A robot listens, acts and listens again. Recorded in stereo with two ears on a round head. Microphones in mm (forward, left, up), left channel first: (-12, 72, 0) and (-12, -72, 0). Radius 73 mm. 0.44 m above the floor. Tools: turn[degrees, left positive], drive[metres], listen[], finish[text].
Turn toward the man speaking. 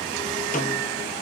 Action: listen[]
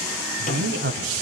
Thought: The man speaking: about 70° right or 110° right.
Action: turn[-70]
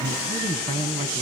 Thought: So it is at 30° right.
Action: turn[-30]
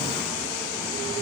Action: listen[]
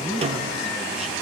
Action: finish[Facing the man speaking.]